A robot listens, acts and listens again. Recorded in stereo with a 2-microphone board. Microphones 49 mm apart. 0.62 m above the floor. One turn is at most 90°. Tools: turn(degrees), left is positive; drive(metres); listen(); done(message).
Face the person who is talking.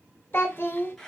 turn(degrees=45)
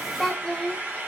done("Facing the child speaking, under 1 m away.")